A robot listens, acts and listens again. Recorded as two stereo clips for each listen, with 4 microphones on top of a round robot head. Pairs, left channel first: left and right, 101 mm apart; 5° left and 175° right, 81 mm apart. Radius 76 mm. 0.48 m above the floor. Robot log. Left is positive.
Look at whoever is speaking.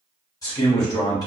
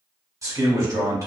note: The man speaking: 145° left.
cmd yaw +145
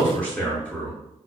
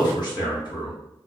note: The man speaking is now 15° left.
cmd yaw +15
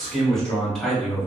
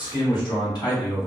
end: Found it: a man speaking, straight ahead, 1 to 2 m away.